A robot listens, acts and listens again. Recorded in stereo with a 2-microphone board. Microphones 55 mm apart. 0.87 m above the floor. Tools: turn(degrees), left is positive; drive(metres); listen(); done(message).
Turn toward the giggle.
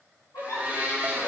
turn(degrees=90)
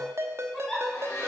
done("Found it: a giggle, straight ahead, 2 to 4 m away.")